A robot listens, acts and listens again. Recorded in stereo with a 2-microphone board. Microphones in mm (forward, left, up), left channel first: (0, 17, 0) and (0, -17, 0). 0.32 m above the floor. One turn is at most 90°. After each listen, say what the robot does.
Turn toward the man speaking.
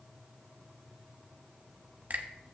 Keep listening.
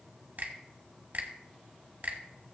Keep listening.
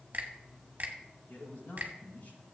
Turn 55° left.
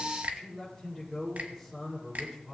Facing the man speaking.